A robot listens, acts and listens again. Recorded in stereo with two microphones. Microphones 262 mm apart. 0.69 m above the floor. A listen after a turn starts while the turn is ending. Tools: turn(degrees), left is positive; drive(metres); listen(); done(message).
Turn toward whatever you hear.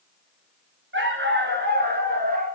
turn(degrees=-35)
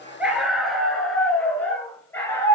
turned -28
turn(degrees=10)
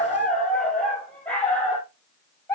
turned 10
turn(degrees=10)
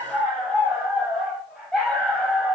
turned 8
done("Facing the dog barking, over 4 m away.")